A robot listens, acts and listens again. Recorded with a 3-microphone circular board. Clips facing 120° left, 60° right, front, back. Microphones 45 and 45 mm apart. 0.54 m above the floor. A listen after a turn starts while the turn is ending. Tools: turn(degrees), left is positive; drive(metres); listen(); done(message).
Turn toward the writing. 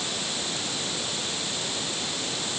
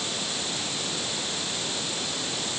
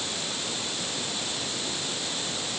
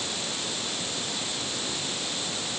listen()
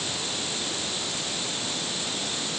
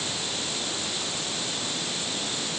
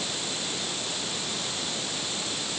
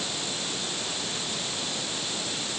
listen()
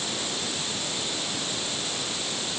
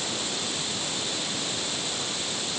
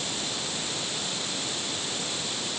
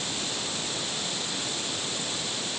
done("I can't make out writing to turn to.")